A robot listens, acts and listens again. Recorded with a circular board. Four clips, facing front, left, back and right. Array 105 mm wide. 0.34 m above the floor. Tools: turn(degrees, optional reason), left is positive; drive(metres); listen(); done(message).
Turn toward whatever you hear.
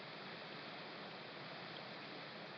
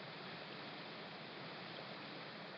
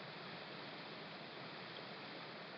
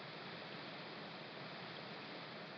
listen()
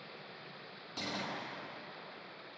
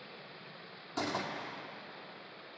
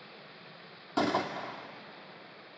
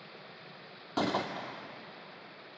turn(degrees=-140, reason="The gunshot: 140° right.")
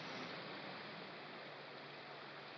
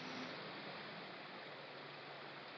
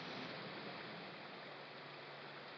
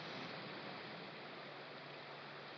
done("I heard a gunshot from this way, but can't make it out now.")